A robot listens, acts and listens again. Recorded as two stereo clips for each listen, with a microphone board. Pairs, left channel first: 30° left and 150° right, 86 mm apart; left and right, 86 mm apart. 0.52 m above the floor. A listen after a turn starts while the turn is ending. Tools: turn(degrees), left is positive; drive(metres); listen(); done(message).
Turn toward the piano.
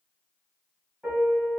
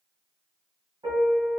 turn(degrees=-70)
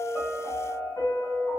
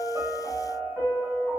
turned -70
done("Facing the piano.")